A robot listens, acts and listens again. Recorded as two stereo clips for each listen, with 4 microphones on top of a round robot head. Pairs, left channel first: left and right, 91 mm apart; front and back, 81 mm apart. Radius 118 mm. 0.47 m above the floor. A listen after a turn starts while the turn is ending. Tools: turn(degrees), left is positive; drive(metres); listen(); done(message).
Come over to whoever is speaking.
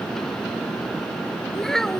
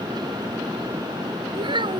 turn(degrees=175)
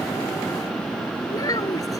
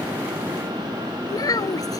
turn(degrees=35)
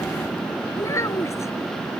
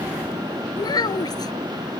turn(degrees=30)
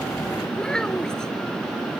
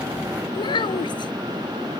drive(metres=1.0)
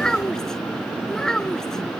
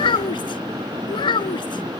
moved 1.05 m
drive(metres=1.0)
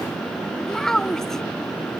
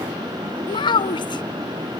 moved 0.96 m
drive(metres=1.0)
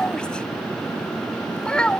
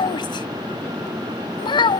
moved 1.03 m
turn(degrees=10)
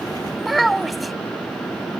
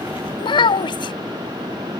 drive(metres=1.0)
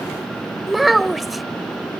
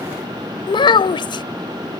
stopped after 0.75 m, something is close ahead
done("Arrived at the child speaking, straight ahead.")